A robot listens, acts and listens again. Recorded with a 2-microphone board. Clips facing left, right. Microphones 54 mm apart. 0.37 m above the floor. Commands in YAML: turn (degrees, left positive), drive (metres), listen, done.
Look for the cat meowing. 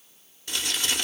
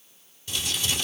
listen: true
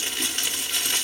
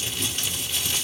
listen: true
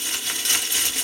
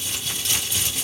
done: "I can't make out a cat meowing, only crumpling."